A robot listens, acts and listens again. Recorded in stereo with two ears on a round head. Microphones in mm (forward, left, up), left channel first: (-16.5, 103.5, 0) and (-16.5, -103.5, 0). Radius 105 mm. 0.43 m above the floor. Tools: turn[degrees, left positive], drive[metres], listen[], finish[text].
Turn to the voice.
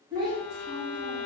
Thought: The child speaking: about 20° right or 160° right.
Action: turn[-20]
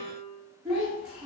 Action: finish[Found it: a child speaking, straight ahead.]